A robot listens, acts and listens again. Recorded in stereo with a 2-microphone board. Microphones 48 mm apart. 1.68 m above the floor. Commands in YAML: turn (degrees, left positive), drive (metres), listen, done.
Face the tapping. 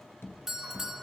turn: 60
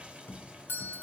turn: 55
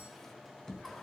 turn: 15
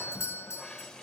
listen: true
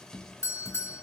done: "Facing the tapping, 2 to 4 m away."